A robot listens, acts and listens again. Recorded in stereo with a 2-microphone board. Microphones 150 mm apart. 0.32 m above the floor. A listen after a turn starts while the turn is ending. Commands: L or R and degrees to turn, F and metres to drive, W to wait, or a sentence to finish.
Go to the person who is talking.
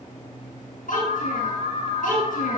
L75
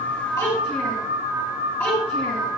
L15
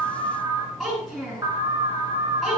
F1.0
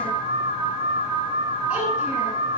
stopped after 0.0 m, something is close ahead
W
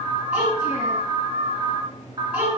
R10
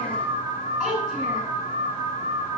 Blocked. The child speaking is further on, straight ahead.